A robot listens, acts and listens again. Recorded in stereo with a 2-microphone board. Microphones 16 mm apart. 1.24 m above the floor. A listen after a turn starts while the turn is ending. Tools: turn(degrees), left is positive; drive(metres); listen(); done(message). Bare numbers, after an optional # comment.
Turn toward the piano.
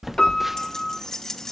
# The piano: about 55° left or 125° left.
turn(55)
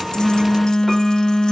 listen()
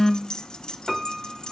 done("Facing the piano, 2 to 4 m away.")